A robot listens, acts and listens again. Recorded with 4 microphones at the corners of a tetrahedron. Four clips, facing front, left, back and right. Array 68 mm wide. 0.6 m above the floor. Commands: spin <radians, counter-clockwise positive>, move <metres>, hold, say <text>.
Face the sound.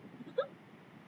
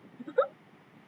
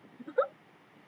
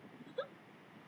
spin 2.18
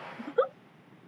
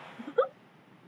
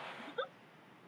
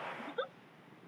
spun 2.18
spin 0.79
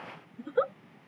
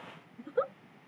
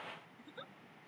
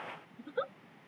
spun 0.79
spin 0.35
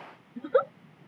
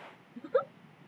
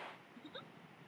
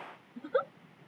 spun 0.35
say Found it: a giggle, straight ahead.